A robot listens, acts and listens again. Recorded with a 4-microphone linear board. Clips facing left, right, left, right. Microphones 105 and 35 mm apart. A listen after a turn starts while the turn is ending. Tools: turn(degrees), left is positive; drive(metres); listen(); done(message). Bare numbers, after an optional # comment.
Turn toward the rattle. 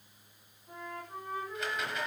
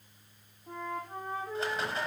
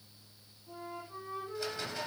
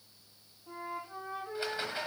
# The rattle: about 35° right or 145° right.
turn(-35)
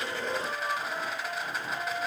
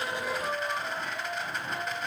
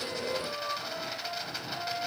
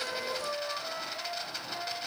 done("Facing the rattle, 1 to 2 m away.")